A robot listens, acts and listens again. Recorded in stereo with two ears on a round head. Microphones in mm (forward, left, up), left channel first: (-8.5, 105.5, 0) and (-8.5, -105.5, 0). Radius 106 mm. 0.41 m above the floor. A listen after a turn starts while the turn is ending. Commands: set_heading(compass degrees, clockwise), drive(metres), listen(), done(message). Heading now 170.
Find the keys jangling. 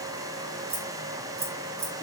set_heading(200)
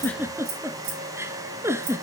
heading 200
set_heading(320)
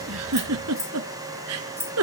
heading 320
set_heading(330)
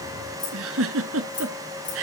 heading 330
done("Found it: keys jangling, straight ahead.")